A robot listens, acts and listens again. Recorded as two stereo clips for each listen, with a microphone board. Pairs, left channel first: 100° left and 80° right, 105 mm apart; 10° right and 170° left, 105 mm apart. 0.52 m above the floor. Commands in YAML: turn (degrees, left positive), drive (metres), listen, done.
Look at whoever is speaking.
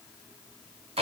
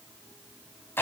listen: true
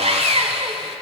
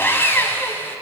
listen: true
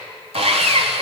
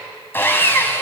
done: "I can't make out anyone speaking, only sawing."